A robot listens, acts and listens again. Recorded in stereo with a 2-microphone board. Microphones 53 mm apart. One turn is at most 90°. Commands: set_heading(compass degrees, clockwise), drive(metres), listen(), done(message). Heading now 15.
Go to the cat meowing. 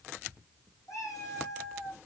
set_heading(285)
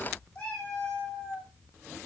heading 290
set_heading(270)
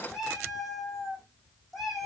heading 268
drive(1.0)
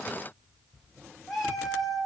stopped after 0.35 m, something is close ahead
done("Something is in my way. I am facing the cat meowing but have not reached it.")